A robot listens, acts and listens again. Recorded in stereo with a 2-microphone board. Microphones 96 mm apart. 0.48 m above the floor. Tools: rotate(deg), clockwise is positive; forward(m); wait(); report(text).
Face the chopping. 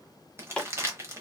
rotate(-30)
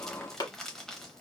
rotate(-135)
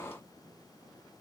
wait()
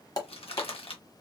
rotate(-40)
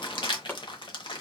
rotate(-20)
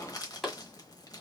report("Facing the chopping.")